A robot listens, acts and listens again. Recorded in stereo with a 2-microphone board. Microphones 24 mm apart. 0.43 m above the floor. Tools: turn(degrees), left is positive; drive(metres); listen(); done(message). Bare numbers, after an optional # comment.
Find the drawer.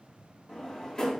# The drawer: about 25° left or 155° left.
turn(25)
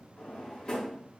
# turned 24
# So it is at 125° left.
turn(125)
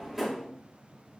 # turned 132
# The drawer is now 10° right.
turn(-10)
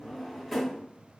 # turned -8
done("Facing the drawer, under 1 m away.")